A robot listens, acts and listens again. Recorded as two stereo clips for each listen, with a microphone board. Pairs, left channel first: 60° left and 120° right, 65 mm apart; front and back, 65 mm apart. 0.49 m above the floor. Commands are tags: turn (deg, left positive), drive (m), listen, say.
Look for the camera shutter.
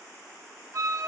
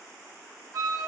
<listen/>
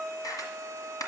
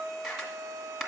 <turn deg="90"/>
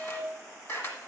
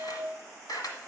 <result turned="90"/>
<turn deg="15"/>
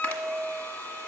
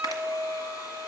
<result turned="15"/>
<listen/>
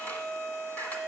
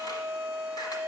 <listen/>
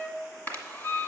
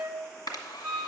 <say>Facing the camera shutter.</say>